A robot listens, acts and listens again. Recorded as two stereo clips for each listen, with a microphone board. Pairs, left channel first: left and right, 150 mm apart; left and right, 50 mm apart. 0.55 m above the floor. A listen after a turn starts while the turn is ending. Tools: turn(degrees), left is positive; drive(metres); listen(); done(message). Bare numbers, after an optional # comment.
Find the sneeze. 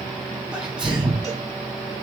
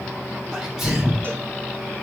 turn(-30)
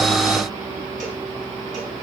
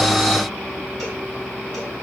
listen()
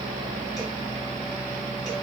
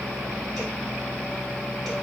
done("I heard a sneeze, but can't make it out now. It was about 25° left or 145° right.")